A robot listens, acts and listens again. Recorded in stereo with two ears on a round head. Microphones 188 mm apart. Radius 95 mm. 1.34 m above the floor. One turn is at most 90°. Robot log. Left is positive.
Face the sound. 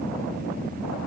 cmd idle
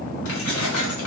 cmd yaw +90
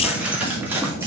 note: So it is at 10° right.
cmd yaw -10
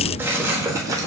note: The keys jangling is now 15° right.
cmd yaw -15
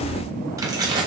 note: The keys jangling is now 20° right.
cmd yaw -20
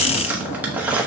note: The keys jangling is now 10° right.
cmd yaw -10
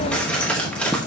end: Facing the keys jangling, 1 to 2 m away.